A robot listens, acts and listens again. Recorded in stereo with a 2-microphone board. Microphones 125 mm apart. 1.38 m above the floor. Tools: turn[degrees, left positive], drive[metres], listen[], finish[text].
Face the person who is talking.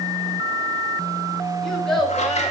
Action: turn[30]
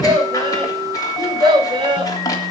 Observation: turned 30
Thought: So it is at 40° right.
Action: turn[-40]
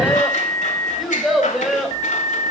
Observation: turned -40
Action: finish[Found it: a child speaking, straight ahead.]